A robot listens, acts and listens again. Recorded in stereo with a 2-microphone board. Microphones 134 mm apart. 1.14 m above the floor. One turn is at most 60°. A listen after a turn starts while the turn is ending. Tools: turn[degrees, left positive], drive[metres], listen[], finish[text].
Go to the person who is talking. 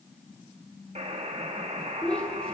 Action: turn[30]
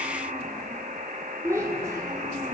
Thought: So it is at 20° right.
Action: turn[-20]
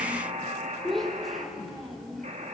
Action: drive[1.0]
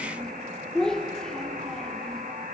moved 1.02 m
Action: drive[1.0]
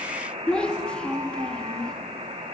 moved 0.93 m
Thought: The child speaking is now 10° left.
Action: turn[10]
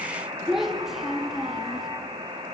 Action: drive[1.0]
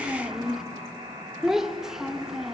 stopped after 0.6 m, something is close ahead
Action: finish[Arrived at the child speaking, straight ahead.]